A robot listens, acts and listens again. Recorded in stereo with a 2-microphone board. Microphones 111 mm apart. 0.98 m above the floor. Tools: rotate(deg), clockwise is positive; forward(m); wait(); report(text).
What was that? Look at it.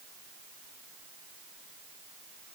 wait()
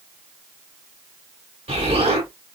rotate(75)
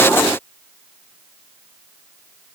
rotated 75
wait()
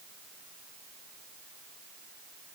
report("I heard an explosion, but can't make it out now. It was about straight ahead or 30° right.")